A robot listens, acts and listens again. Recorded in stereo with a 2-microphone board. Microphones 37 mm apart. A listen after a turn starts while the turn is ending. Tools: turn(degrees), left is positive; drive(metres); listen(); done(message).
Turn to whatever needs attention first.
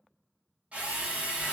listen()
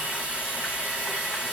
listen()
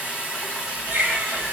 turn(degrees=-90)
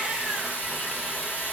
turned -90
listen()
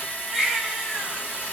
done("Found it: a baby crying, straight ahead, 1 to 2 m away.")